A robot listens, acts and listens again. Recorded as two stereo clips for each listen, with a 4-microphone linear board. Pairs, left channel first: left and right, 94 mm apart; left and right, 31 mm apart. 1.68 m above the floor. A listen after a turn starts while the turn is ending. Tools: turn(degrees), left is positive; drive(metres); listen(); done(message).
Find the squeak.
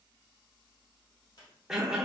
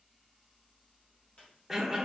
turn(degrees=50)
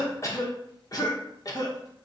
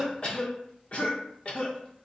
listen()
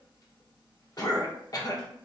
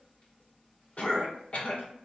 listen()
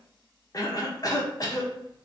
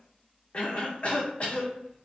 done("I heard a squeak, but can't make it out now. It was about straight ahead or 80° left.")